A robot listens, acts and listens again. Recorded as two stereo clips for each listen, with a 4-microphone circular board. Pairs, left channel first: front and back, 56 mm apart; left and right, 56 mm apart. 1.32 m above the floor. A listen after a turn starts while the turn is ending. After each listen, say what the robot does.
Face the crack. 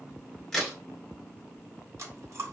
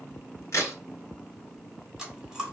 Turn 85° left.
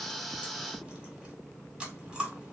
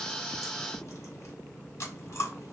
Facing where the crack came from. I can't hear it now.